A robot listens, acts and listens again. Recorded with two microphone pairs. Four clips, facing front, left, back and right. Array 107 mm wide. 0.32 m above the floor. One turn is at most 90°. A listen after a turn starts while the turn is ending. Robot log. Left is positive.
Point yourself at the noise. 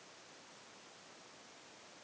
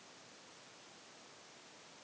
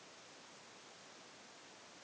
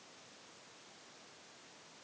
cmd idle
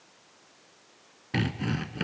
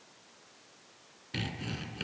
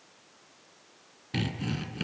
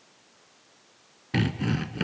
note: The sawing: 50° right.
cmd yaw -50
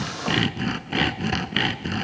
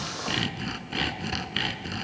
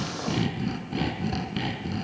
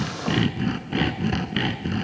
note: The sawing is now 10° right.
cmd yaw -10
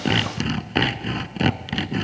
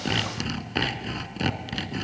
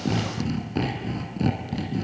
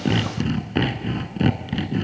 end: Facing the sawing.